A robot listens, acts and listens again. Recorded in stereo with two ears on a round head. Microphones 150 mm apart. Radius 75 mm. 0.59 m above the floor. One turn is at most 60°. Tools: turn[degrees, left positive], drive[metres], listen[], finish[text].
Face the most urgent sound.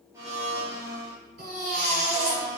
Thought: The baby crying: about 60° right or 120° right.
Action: turn[-60]
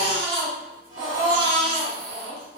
Thought: So it is at 55° right.
Action: turn[-55]
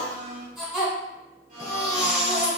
Action: finish[Found it: a baby crying, straight ahead, 1 to 2 m away.]